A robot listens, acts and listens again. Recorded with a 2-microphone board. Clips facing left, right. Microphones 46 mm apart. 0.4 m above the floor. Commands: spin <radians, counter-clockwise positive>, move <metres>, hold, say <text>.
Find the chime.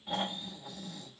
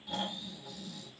hold
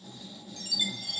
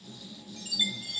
spin -0.44
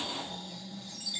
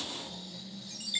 spin -2.27
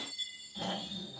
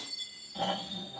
spin 0.61
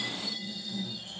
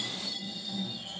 hold
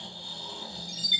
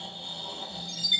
say Facing the chime, 1 to 2 m away.